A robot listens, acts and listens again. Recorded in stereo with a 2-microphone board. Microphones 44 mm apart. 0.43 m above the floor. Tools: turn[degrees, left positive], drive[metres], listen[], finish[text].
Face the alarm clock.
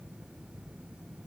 Action: listen[]
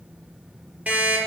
Thought: The alarm clock: about 40° right or 140° right.
Action: turn[-40]
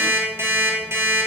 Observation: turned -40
Thought: So it is at 95° right.
Action: turn[-95]
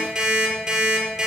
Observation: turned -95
Thought: The alarm clock is now 10° right.
Action: turn[-10]
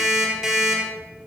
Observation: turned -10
Action: finish[Facing the alarm clock.]